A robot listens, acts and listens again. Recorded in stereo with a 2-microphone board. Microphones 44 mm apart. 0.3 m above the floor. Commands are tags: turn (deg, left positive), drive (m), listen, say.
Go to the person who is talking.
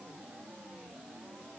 <listen/>
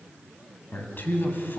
<turn deg="50"/>
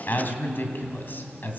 <turn deg="65"/>
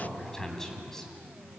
<turn deg="10"/>
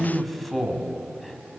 <drive m="1.0"/>
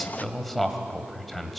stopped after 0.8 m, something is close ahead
<say>I am next to the man speaking.</say>